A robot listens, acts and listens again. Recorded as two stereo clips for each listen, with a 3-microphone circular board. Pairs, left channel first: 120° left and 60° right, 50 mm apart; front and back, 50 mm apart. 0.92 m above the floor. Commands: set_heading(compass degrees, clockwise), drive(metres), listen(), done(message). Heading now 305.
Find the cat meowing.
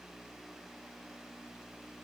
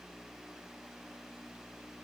listen()
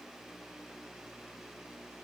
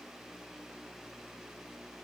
listen()
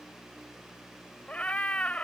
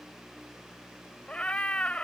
set_heading(245)
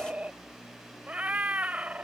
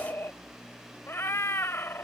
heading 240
done("Facing the cat meowing.")